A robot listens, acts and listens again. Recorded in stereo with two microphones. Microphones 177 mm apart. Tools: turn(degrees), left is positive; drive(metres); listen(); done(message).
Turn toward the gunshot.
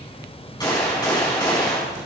turn(degrees=25)
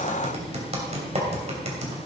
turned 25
listen()
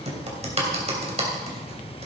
done("I heard a gunshot, but can't make it out now. It was about straight ahead or 130° left.")